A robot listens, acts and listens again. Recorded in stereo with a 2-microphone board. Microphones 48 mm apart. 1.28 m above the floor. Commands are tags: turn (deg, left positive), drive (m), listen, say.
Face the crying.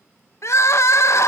<turn deg="65"/>
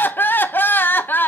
<turn deg="45"/>
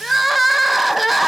<say>Facing the crying, under 1 m away.</say>